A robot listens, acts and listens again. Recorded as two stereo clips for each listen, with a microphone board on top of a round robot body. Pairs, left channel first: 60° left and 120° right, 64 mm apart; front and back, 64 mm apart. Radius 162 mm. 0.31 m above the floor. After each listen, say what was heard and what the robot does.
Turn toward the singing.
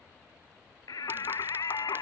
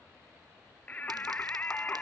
The singing: 65° left. Turn 65° left.
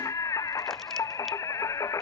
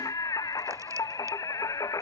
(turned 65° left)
The singing is now 30° left. Turn 30° left.
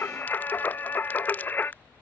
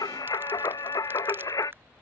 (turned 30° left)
Found it: singing, straight ahead.